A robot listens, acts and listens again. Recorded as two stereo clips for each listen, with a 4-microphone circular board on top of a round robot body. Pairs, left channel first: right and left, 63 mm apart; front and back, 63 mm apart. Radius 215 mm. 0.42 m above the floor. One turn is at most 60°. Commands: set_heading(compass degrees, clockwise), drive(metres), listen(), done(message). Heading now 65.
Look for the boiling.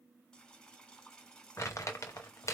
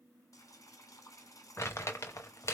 set_heading(80)
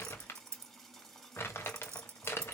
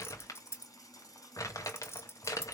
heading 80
done("Facing the boiling.")